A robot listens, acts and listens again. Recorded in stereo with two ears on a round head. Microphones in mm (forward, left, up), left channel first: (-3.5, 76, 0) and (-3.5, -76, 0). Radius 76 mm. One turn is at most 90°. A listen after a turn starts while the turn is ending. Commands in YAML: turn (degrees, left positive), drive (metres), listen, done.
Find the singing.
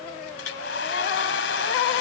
listen: true
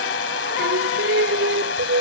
turn: -70
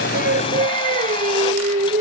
turn: -40
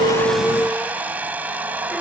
done: "Found it: singing, straight ahead."